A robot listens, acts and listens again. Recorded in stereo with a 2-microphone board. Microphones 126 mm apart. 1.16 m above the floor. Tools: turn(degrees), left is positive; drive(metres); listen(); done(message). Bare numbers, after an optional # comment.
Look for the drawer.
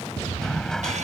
turn(30)
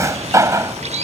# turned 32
# So it is at 25° right.
turn(-25)
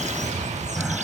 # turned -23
done("Found it: a drawer, straight ahead.")